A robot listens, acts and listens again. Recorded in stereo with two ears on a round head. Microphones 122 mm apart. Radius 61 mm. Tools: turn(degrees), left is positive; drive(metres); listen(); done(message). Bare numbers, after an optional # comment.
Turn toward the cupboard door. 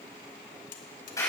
listen()
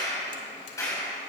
listen()
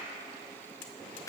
done("I can't make out a cupboard door to turn to.")